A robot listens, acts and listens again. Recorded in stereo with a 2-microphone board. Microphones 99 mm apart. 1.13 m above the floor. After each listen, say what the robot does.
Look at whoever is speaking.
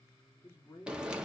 Turn 30° left.
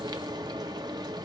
Keep listening.
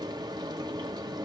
Keep listening.
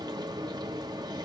I heard a man speaking, but can't make it out now. It was about straight ahead or 120° left.